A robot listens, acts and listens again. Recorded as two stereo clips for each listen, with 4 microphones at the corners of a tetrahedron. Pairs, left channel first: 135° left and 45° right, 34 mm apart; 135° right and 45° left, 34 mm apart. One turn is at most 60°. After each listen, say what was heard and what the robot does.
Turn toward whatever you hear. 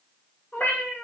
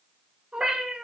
The cat meowing: 115° left. Turn 60° left.
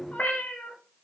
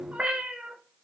The cat meowing is now 105° left. Turn 60° left.
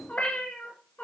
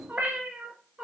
The cat meowing is now 105° left. Turn 60° left.
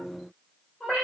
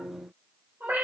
The cat meowing is now 45° left. Turn 45° left.
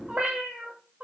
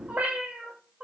The cat meowing is now 10° right. Turn 10° right.
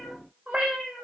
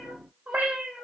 Facing the cat meowing, 2 to 4 m away.